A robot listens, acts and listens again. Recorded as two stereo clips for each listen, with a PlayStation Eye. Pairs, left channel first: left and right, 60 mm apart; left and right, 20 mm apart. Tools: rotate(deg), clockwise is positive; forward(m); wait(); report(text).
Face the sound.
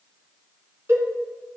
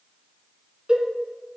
rotate(45)
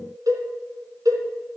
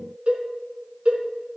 rotate(85)
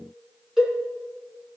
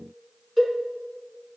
report("Found it: a cowbell, straight ahead, 2 to 4 m away.")